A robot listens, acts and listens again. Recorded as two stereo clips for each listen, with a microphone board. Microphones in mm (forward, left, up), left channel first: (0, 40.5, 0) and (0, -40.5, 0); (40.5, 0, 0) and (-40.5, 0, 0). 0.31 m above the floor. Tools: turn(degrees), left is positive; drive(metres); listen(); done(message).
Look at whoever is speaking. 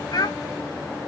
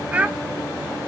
turn(degrees=110)
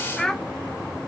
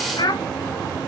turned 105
done("Facing the child speaking.")